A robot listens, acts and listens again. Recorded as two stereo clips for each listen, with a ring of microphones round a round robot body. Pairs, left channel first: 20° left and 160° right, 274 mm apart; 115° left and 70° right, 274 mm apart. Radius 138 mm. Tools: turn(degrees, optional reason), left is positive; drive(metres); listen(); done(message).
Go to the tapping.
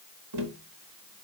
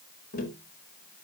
turn(degrees=175, reason="The tapping: 175° left.")
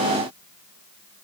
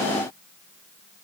listen()
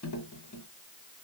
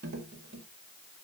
turn(degrees=-15, reason="The tapping is now 15° right.")
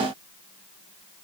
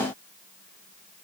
listen()
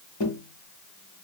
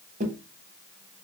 drive(metres=1.0)
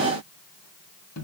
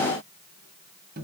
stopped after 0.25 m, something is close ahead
turn(degrees=-10, reason="The tapping is now 10° right.")
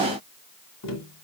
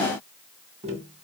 done("Something is in my way. I am facing the tapping but have not reached it.")